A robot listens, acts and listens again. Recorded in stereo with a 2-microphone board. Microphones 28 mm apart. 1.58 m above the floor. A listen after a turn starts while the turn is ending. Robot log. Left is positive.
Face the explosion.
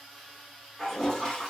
cmd idle
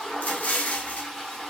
note: The explosion: about 60° left or 120° left.
cmd yaw +60
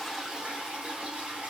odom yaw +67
cmd idle
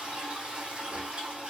end: I heard an explosion, but can't make it out now. It was about 10° right or 55° left.